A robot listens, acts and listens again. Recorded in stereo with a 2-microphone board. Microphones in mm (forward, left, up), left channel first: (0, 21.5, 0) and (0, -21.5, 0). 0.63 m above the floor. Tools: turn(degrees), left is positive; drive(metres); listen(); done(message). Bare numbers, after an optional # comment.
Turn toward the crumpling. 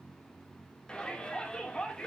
listen()
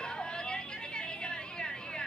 listen()
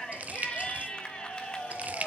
# The crumpling: about 35° right or 145° right.
turn(-35)
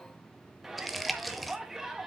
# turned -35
done("Facing the crumpling, under 1 m away.")